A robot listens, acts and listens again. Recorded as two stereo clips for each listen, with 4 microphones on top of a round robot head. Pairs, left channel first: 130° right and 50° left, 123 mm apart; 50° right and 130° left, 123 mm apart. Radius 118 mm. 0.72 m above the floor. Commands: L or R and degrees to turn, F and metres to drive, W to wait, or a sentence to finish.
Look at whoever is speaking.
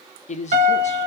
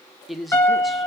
R145
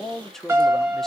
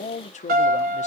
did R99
R45
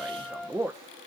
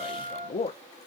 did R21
R25
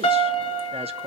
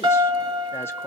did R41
L20
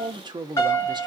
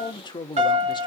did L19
Facing the man speaking.